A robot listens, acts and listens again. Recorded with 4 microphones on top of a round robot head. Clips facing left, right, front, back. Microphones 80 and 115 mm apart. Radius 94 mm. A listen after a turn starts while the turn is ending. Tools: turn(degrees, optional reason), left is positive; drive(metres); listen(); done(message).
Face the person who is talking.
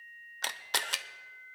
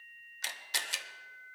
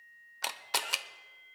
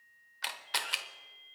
listen()
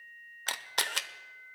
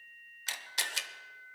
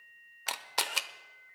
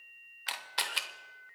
listen()
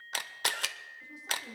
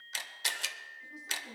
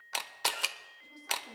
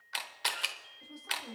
turn(degrees=140, reason="The woman speaking: 140° left.")
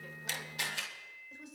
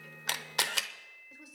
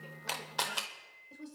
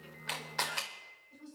done("Facing the woman speaking, over 4 m away.")